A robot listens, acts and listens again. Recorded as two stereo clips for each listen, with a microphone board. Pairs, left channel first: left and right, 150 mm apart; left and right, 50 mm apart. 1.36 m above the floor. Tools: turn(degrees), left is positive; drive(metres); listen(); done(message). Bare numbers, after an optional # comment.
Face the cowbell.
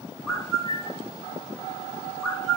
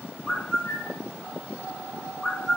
listen()
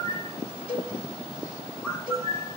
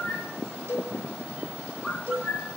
turn(-90)
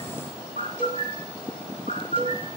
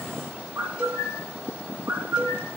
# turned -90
listen()
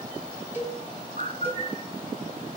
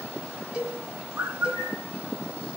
# The cowbell is now 15° right.
turn(-15)
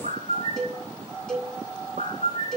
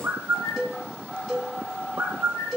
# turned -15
done("Facing the cowbell, over 4 m away.")